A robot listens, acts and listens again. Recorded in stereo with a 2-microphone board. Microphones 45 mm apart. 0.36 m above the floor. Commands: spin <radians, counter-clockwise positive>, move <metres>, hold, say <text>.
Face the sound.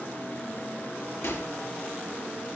spin 1.31
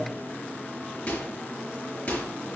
spin 0.52
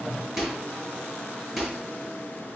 say Facing the microwave, over 4 m away.